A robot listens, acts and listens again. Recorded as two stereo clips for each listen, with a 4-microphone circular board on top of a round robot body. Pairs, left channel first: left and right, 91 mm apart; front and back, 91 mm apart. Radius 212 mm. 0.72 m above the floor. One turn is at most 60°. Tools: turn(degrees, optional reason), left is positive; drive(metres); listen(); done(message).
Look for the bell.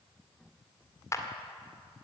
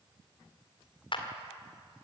listen()
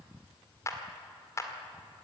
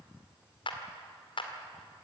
listen()
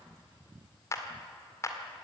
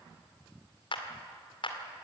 done("I can't make out a bell to turn to.")